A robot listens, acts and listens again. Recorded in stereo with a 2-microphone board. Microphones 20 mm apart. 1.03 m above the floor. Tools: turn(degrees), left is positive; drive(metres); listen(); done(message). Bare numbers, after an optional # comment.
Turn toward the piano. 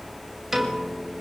# The piano: about 20° right or 160° right.
turn(-20)
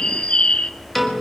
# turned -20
done("Facing the piano.")